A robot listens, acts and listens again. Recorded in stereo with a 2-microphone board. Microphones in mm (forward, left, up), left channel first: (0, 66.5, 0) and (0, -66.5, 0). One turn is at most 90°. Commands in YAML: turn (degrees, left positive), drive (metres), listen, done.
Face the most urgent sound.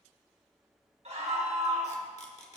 turn: -65
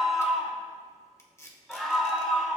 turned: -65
done: "Found it: a scream, straight ahead."